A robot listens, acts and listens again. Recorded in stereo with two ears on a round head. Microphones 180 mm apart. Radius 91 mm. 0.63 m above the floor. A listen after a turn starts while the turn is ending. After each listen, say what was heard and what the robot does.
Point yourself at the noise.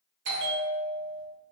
The bell: about 65° right or 115° right. Turn 65° right.
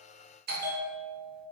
So it is at 50° right. Turn 50° right.
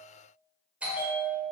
Facing the bell.